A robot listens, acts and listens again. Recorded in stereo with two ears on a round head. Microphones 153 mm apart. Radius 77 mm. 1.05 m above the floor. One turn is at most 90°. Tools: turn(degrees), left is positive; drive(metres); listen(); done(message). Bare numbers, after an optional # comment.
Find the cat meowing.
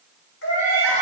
turn(90)
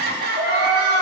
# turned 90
done("Found it: a cat meowing, straight ahead.")